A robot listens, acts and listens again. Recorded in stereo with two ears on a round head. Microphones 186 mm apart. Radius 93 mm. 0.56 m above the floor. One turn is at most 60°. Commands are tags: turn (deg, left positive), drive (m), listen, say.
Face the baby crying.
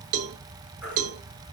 <turn deg="-30"/>
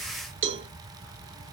<listen/>
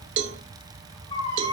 <turn deg="25"/>
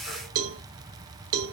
<listen/>
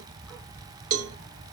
<listen/>
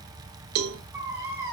<turn deg="-10"/>
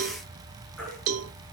<say>Found it: a baby crying, straight ahead, over 4 m away.</say>